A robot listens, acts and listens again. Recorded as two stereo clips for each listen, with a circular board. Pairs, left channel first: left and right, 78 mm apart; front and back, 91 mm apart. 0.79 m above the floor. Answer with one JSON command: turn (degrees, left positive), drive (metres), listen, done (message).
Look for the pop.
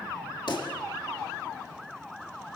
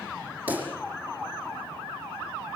{"turn": 110}
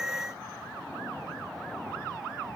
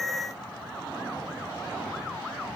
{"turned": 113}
{"done": "I heard a pop from this way, but can't make it out now."}